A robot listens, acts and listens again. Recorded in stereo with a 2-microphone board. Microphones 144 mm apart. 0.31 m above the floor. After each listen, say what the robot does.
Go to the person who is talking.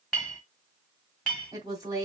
Turn 25° right.
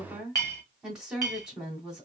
Drive 1.0 m forward.
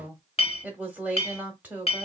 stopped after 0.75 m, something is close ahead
Turn 20° right.
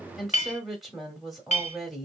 Arrived at the woman speaking, straight ahead.